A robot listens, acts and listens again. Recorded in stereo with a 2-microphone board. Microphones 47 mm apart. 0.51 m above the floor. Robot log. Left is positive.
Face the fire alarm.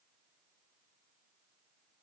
cmd idle
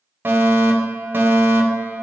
note: The fire alarm: about 45° right or 135° right.
cmd yaw -45
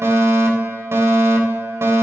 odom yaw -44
note: So it is at 80° right.
cmd yaw -80
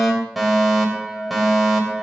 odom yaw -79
end: Facing the fire alarm, 2 to 4 m away.